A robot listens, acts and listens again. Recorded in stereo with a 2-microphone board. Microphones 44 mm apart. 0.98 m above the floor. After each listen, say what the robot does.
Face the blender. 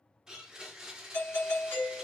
Turn 30° right.
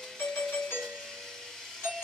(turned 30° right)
Turn 10° left.
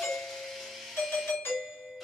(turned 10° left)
Found it: a blender, straight ahead, under 1 m away.